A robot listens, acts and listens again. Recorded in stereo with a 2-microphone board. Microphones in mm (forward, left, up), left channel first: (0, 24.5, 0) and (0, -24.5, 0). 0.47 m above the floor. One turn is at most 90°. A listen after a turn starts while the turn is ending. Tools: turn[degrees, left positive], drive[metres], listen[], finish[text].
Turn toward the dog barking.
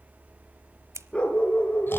Thought: The dog barking: about 25° left or 155° left.
Action: turn[25]
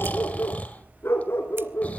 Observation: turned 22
Thought: So it is at 115° left.
Action: turn[90]
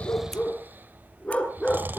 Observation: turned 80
Thought: The dog barking is now 20° left.
Action: turn[20]
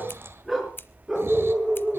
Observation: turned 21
Thought: The dog barking is now 10° right.
Action: turn[-10]
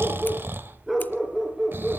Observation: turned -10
Action: finish[Facing the dog barking.]